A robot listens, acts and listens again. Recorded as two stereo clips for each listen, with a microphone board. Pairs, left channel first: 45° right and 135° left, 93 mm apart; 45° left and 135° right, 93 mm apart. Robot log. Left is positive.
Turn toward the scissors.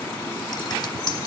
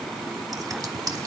cmd idle
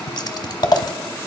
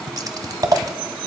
note: The scissors: 85° right.
cmd yaw -85
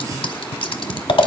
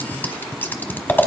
note: The scissors is now 25° right.
cmd yaw -25
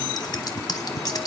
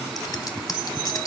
end: Found it: scissors, straight ahead, 1 to 2 m away.